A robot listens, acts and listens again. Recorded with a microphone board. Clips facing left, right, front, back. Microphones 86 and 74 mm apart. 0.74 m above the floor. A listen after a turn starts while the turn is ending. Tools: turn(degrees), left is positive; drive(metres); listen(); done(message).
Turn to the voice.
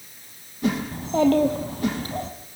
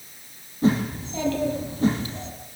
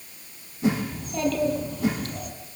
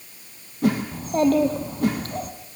turn(degrees=135)
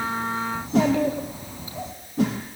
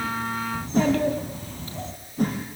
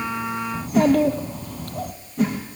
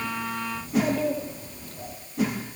turn(degrees=15)
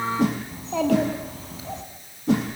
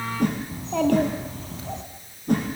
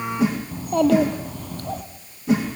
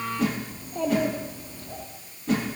done("Found it: a child speaking, straight ahead, over 4 m away.")